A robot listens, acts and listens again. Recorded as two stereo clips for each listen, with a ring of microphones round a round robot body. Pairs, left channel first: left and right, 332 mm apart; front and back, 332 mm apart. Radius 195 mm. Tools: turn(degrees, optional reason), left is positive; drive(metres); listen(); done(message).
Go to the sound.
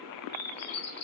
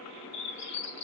turn(degrees=50, reason="The bird: 50° left.")
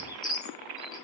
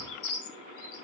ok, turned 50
turn(degrees=10, reason="The bird is now 10° left.")
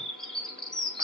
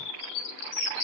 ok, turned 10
drive(metres=1.0)
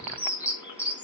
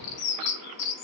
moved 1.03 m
drive(metres=1.0)
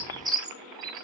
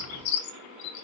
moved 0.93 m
turn(degrees=-10, reason="The bird is now 10° right.")
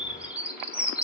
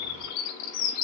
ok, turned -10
drive(metres=1.0)
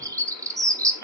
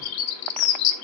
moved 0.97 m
turn(degrees=-10, reason="The bird is now 10° right.")
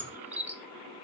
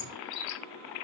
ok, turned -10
drive(metres=1.0)
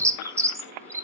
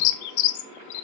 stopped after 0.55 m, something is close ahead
turn(degrees=-10, reason="The bird is now 10° right.")
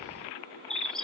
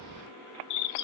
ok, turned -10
done("I am next to the bird.")